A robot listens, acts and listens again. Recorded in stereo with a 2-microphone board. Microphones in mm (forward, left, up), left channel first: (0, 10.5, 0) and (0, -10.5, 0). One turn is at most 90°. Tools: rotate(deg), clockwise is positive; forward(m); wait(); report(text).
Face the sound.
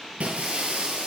rotate(90)
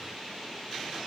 report("Facing where the breaking glass came from. I can't hear it now.")